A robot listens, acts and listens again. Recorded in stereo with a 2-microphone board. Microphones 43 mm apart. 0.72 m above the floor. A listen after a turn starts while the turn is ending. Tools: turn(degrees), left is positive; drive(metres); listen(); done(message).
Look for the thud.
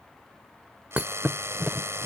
turn(degrees=-35)
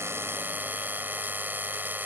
listen()
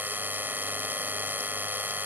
done("I heard a thud, but can't make it out now. It was about straight ahead or 110° right.")